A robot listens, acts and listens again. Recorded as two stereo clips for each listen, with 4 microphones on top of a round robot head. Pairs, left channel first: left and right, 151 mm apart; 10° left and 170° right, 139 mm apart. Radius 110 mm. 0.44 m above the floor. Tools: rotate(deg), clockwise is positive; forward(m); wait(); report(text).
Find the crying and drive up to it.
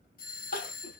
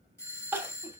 rotate(-115)
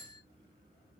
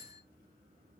wait()
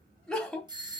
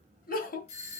forward(1.0)
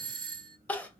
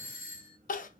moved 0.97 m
rotate(-10)
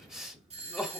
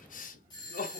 forward(1.0)
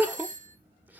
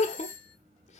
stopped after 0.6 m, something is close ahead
rotate(15)
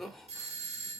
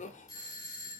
report("Arrived at the crying, straight ahead.")